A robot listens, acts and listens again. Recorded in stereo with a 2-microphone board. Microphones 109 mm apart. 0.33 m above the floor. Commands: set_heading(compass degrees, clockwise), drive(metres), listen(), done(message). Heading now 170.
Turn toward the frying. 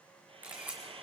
set_heading(230)
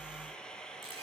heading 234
done("Found it: frying, straight ahead, 1 to 2 m away.")